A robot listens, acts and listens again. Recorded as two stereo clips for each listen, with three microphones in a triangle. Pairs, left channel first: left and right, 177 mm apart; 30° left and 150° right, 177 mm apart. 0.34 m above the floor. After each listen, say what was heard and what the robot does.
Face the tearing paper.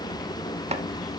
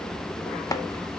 Keep listening.
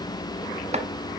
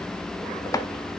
Keep listening.
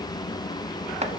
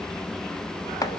I can't make out tearing paper to turn to.